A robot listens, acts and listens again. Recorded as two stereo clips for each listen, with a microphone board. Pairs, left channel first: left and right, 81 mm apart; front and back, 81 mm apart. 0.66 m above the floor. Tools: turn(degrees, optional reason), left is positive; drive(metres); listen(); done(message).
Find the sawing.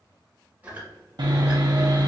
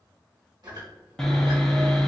turn(degrees=-85, reason="The sawing: 85° right.")
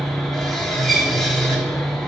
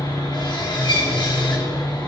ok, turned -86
done("Found it: sawing, straight ahead, under 1 m away.")